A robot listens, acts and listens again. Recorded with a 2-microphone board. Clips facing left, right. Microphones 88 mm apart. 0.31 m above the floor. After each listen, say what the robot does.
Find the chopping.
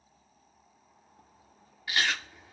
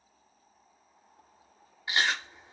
Keep listening.
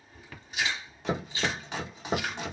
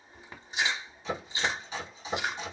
Turn 70° left.
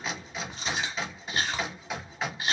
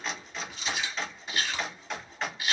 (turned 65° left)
Found it: chopping, straight ahead.